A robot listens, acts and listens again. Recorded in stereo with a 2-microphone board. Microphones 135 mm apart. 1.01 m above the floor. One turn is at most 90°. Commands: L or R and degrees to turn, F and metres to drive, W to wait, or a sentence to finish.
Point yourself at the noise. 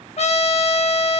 L50
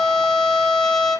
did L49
Found it: a trumpet, straight ahead.